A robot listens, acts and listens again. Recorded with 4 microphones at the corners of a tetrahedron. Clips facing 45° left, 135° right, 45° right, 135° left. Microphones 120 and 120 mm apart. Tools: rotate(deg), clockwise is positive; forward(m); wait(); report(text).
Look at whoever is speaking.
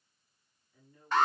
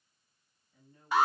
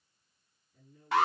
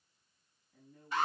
rotate(-160)
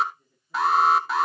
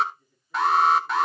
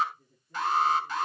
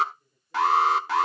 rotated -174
rotate(20)
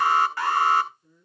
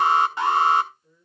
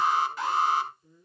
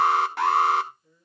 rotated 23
report("Facing the woman speaking.")